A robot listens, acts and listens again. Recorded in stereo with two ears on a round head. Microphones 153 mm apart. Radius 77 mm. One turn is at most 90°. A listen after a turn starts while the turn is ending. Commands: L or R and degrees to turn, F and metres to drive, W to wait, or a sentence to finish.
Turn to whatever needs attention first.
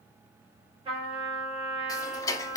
W
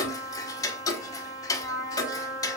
W
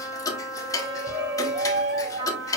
R65
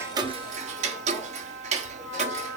W
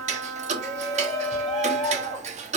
Found it: a shout, straight ahead, 2 to 4 m away.